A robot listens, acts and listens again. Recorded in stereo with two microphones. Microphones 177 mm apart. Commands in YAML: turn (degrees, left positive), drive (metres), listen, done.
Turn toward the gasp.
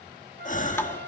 turn: 45
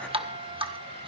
listen: true
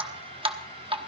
done: "I heard a gasp, but can't make it out now. It was about straight ahead or 90° left."